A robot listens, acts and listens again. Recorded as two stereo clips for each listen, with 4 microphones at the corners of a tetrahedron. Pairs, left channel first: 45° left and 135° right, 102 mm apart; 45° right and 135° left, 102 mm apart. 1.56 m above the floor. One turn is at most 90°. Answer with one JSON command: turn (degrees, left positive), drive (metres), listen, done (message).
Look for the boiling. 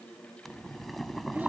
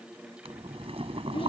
{"turn": 90}
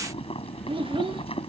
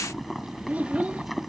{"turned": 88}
{"turn": 50}
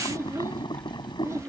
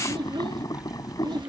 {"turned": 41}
{"done": "Facing the boiling."}